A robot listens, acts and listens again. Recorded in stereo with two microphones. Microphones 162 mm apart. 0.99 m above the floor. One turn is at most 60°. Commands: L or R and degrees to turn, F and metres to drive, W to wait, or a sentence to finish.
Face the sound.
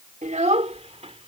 R40
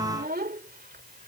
R60
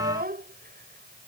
R60
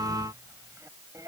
R20
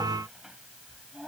Facing the child speaking.